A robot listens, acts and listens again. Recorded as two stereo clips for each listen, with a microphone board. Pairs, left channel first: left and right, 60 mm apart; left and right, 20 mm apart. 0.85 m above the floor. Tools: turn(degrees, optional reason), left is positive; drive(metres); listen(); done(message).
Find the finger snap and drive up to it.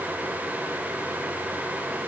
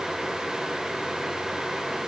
listen()
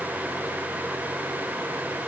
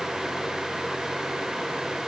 listen()
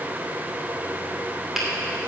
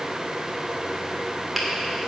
turn(degrees=-30)
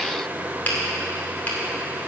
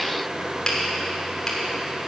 turn(degrees=30, reason="So it is at 30° left.")
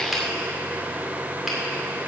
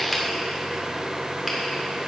drive(metres=1.0)
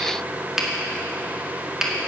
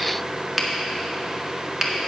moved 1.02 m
drive(metres=1.0)
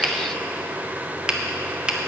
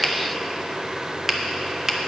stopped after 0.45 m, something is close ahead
turn(degrees=-15, reason="The finger snap is now 15° right.")
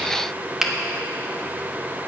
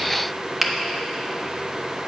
done("Arrived at the finger snap, straight ahead.")